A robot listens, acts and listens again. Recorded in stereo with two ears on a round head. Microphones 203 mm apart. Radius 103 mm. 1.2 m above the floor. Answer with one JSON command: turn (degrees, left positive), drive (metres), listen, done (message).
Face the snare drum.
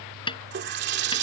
{"turn": 20}
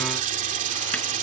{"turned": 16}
{"listen": true}
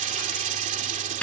{"done": "Found it: a snare drum, straight ahead."}